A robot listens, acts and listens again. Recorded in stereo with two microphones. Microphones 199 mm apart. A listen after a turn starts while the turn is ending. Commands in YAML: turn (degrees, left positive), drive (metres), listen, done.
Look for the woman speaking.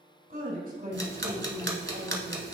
turn: -45
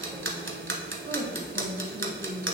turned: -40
turn: -55
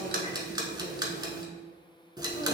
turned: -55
listen: true
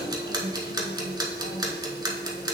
listen: true
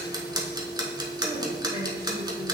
done: "I heard a woman speaking, but can't make it out now. It was about straight ahead or 70° right."